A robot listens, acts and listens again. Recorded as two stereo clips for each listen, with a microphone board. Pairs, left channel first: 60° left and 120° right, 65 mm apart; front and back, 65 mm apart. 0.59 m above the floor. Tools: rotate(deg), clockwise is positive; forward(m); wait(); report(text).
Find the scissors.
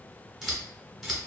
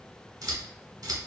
rotate(-150)
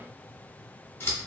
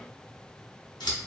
report("Facing the scissors, 1 to 2 m away.")